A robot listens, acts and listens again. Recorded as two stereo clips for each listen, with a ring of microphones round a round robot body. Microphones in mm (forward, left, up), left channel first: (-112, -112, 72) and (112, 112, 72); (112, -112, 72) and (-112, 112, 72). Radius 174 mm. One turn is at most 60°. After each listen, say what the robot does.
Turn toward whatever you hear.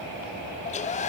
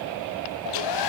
Turn 60° right.
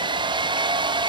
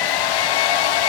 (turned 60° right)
Turn 30° right.
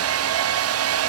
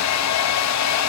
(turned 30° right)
Facing the hair dryer.